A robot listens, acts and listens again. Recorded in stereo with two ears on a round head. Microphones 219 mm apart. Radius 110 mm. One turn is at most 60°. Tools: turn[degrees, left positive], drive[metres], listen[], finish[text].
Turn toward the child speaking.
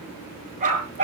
Action: listen[]
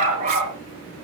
Action: listen[]
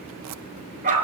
Action: finish[I can't make out a child speaking to turn to.]